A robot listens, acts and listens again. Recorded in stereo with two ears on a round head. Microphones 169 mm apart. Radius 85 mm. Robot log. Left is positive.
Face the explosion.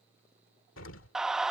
cmd yaw +90
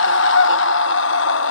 end: I heard an explosion from this way, but can't make it out now.